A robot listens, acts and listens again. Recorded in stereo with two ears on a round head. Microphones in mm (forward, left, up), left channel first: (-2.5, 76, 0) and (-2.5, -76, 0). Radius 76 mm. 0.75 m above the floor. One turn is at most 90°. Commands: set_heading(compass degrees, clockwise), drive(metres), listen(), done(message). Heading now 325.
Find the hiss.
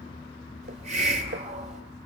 set_heading(10)
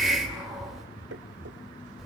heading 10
done("Facing the hiss.")